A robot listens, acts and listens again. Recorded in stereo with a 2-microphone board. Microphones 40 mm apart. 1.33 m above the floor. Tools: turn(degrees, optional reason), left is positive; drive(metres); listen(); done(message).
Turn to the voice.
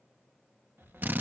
turn(degrees=90)
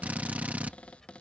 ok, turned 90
turn(degrees=10, reason="So it is at 10° left.")
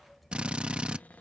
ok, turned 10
done("Found it: a child speaking, straight ahead.")